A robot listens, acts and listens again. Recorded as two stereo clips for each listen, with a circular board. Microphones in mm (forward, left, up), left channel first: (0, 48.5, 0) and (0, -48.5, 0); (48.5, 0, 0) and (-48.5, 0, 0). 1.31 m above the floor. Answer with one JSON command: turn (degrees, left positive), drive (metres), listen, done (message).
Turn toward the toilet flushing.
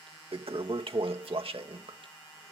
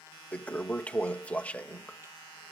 {"turn": -75}
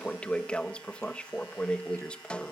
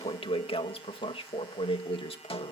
{"turn": 10}
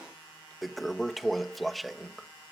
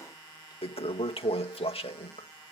{"done": "Facing the toilet flushing."}